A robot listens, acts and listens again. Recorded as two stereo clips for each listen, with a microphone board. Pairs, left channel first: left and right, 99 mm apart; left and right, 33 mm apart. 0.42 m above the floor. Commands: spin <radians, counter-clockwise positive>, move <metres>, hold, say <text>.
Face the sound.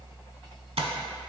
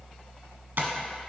spin -1.57
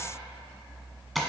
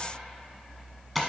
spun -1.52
say Facing the tapping, under 1 m away.